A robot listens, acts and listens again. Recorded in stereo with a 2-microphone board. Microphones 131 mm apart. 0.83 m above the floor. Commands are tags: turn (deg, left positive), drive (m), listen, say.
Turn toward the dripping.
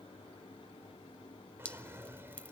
<turn deg="30"/>
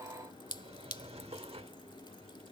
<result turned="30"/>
<turn deg="135"/>
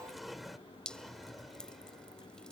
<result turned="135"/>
<turn deg="10"/>
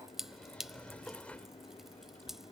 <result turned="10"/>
<say>Found it: dripping, straight ahead.</say>